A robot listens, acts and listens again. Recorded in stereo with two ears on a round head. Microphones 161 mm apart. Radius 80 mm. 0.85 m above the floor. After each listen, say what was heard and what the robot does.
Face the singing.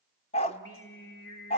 The singing: about 60° left or 120° left. Turn 60° left.
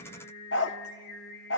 So it is at 55° left. Turn 55° left.
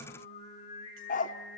The singing is now 45° left. Turn 45° left.
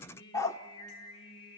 The singing is now 30° left. Turn 30° left.
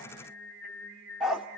The singing is now 10° left. Turn 10° left.
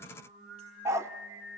Facing the singing.